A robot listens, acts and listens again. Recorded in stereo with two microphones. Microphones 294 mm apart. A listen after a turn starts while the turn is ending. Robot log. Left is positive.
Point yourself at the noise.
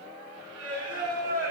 note: The singing: about 60° right or 120° right.
cmd yaw -60
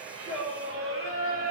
note: So it is at 55° right.
cmd yaw -55
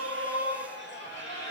note: The singing is now 50° right.
cmd yaw -50
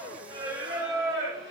note: The singing is now 20° right.
cmd yaw -20
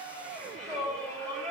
end: Facing the singing.